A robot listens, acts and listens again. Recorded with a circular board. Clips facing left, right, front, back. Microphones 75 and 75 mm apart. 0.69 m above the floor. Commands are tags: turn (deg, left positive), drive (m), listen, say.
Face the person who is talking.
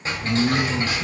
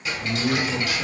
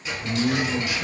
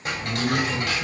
<turn deg="-75"/>
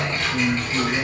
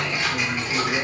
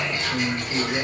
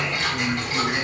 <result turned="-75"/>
<turn deg="-25"/>
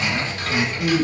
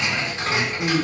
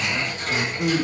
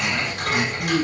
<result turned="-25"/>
<turn deg="-15"/>
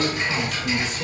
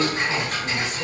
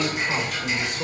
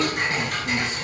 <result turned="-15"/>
<listen/>
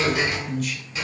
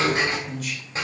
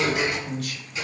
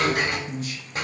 <say>Facing the man speaking.</say>